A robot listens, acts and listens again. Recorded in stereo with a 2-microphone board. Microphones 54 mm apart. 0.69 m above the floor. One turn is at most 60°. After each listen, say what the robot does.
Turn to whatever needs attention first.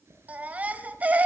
Turn 25° right.
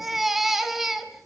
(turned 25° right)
Facing the baby crying, 2 to 4 m away.